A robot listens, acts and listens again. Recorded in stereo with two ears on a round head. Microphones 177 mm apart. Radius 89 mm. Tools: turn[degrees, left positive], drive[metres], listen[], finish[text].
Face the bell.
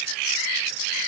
Action: listen[]
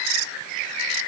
Action: listen[]
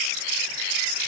Action: finish[I can't make out a bell.]